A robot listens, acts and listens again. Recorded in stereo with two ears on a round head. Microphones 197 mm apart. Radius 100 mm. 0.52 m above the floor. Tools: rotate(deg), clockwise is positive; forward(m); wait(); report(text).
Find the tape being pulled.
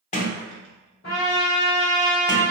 wait()
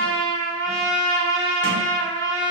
wait()
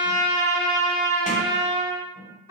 report("I can't make out tape being pulled, only a trumpet and a sliding door.")